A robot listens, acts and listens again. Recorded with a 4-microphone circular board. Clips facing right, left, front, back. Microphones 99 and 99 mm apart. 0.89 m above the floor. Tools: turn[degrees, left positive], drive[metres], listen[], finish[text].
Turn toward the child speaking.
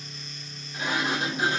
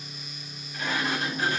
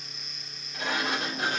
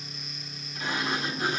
Action: listen[]
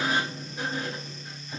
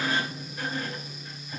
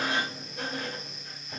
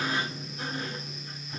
Action: listen[]
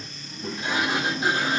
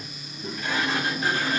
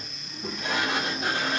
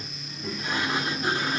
Thought: The child speaking: 65° right.
Action: turn[-65]
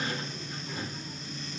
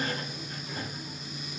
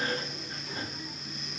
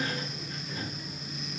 Action: listen[]
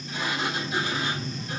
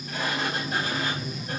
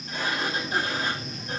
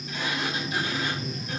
Action: finish[Found it: a child speaking, straight ahead.]